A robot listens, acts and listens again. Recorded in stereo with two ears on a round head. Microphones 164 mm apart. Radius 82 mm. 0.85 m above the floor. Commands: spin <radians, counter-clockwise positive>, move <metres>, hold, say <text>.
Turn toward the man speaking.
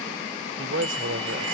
spin -1.57
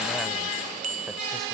hold
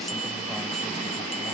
hold
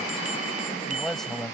say Facing the man speaking.